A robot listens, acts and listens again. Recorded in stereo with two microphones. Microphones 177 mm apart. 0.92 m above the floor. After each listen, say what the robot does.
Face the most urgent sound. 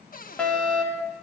Turn 30° left.
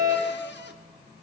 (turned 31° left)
Turn 25° right.
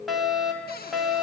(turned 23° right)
Found it: a fire alarm, straight ahead, 2 to 4 m away.